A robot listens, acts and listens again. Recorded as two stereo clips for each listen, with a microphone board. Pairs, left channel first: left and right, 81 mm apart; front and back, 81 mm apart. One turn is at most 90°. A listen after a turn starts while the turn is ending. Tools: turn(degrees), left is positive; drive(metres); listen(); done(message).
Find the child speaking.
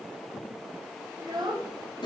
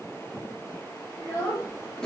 turn(degrees=-60)
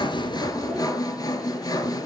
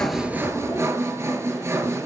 listen()
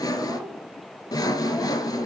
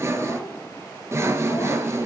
listen()
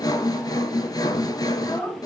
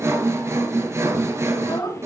turn(degrees=15)
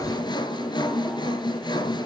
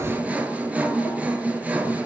listen()
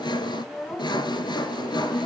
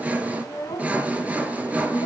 done("Facing the child speaking.")